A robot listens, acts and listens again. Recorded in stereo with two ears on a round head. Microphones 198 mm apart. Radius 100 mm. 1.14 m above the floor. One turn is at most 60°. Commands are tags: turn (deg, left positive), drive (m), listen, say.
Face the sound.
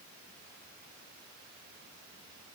<listen/>
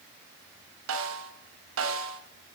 <turn deg="-60"/>
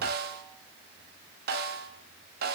<turn deg="-45"/>
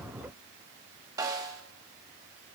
<turn deg="-15"/>
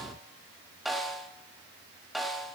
<say>Facing the snare drum, 1 to 2 m away.</say>